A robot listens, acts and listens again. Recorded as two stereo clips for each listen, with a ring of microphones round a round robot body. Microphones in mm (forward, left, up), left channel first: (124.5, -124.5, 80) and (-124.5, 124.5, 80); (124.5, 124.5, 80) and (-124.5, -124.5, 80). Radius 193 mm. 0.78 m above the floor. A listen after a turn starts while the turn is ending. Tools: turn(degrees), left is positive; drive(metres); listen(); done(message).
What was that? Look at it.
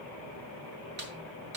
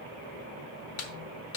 turn(degrees=75)
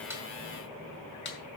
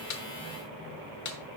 turn(degrees=15)
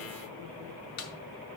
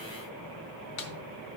done("Found it: a snare drum, straight ahead, 1 to 2 m away.")